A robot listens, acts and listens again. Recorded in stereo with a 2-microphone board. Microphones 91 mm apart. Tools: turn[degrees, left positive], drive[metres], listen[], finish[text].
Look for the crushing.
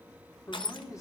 Thought: The crushing: about 70° left or 110° left.
Action: turn[70]
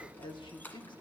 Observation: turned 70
Thought: So it is at 20° left.
Action: turn[20]
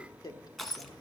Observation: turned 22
Action: finish[Found it: crushing, straight ahead.]